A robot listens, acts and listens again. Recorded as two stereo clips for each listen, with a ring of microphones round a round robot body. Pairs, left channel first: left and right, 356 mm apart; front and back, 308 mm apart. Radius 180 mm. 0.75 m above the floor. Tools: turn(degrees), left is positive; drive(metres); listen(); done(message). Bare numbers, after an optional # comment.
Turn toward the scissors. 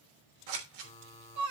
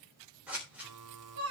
# The scissors: 95° right.
turn(-95)
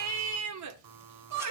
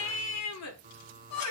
listen()
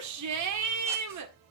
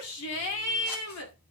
listen()
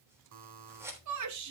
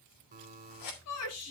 done("Facing the scissors.")